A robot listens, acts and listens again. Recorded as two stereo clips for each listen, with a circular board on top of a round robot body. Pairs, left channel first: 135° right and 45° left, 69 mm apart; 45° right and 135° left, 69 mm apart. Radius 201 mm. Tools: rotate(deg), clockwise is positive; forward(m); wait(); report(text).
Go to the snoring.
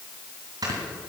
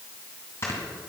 rotate(-10)
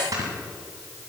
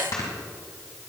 forward(1.0)
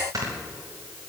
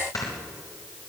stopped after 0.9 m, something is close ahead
report("I am next to the snoring.")